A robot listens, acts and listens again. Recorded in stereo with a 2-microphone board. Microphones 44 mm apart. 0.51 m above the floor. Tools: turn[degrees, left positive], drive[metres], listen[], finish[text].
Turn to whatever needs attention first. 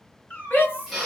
Thought: The shout: about 60° left or 120° left.
Action: turn[60]
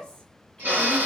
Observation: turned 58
Action: listen[]
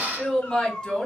Thought: So it is at 20° left.
Action: turn[20]
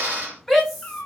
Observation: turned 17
Action: finish[Facing the shout, 1 to 2 m away.]